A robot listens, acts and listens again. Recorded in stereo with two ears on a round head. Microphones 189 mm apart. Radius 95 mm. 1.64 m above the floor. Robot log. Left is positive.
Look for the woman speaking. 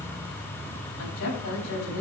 note: The woman speaking: about 65° left or 115° left.
cmd yaw +65
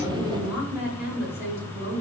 note: So it is at 10° right.
cmd yaw -10
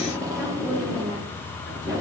cmd idle
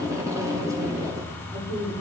note: The woman speaking is now 15° right.
cmd yaw -15
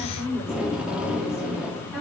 end: Found it: a woman speaking, straight ahead, over 4 m away.